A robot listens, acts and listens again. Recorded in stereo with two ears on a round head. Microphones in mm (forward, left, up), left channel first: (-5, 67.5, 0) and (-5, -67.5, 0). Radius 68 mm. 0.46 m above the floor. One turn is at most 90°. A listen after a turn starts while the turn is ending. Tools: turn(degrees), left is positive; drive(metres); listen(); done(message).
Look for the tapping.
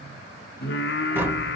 turn(degrees=-30)
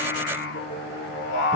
listen()
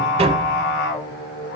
turn(degrees=-90)
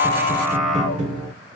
turn(degrees=-50)
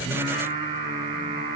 listen()
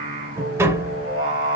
turn(degrees=-20)
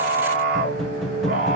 done("Facing the tapping.")